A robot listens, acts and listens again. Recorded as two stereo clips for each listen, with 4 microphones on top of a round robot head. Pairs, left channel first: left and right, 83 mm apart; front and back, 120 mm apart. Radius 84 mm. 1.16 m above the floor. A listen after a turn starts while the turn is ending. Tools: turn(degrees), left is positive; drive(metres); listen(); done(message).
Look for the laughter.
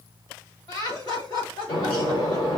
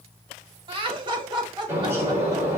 turn(degrees=130)
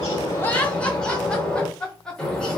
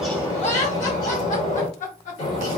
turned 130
turn(degrees=10)
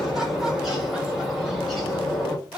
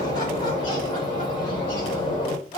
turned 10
turn(degrees=-15)
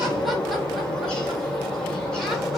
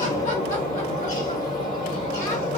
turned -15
listen()
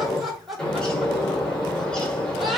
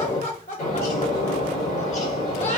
done("Found it: laughter, straight ahead.")